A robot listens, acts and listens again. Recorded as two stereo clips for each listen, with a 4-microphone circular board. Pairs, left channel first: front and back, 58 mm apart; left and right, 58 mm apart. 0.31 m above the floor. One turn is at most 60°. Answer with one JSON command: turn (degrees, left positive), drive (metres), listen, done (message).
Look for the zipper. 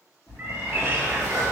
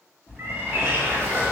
{"turn": 20}
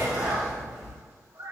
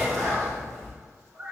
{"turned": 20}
{"done": "Found it: a zipper, straight ahead, 1 to 2 m away."}